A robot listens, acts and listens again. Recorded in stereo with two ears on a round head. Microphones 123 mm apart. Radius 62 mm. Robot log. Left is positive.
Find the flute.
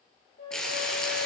note: The flute: about 70° left or 110° left.
cmd yaw +70
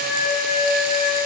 note: So it is at 35° left.
cmd yaw +35
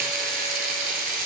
cmd idle
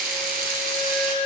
end: Facing the flute.